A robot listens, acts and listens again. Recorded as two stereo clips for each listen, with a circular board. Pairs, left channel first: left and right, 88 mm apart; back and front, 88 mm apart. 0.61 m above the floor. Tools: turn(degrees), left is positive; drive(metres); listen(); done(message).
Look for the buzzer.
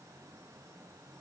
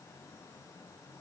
listen()
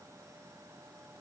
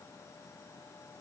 listen()
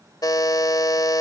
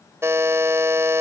turn(degrees=55)
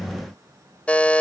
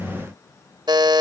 turn(degrees=15)
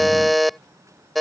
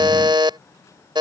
done("Found it: a buzzer, straight ahead.")